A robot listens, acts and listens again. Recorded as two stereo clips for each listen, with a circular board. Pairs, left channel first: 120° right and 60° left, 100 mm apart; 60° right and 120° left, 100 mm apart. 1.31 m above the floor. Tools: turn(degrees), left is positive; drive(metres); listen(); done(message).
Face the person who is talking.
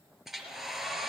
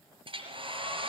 listen()
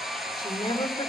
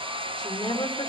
turn(degrees=-85)
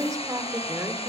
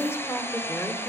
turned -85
done("Facing the woman speaking.")